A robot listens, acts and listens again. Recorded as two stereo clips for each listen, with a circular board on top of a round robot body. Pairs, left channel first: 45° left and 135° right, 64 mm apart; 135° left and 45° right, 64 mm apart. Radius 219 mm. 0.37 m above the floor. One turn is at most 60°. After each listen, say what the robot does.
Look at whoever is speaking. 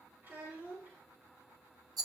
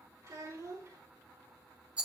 Turn 60° right.
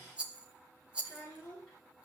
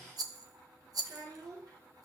Turn 20° right.
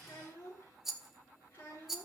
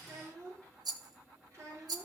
Turn 10° right.
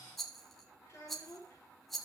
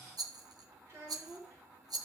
Facing the child speaking, over 4 m away.